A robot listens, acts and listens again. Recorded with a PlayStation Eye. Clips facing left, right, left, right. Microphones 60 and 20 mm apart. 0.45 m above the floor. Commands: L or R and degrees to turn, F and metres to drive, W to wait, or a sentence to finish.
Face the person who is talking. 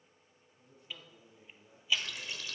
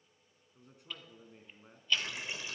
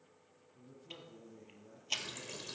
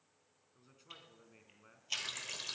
R90
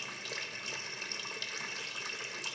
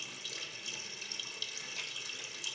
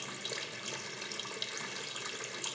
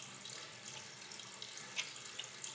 W
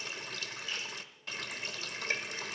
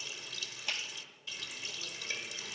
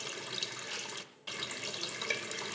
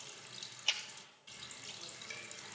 W
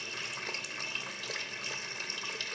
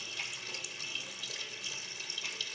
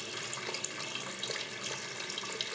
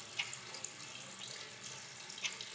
Facing where the man speaking came from. I can't hear it now.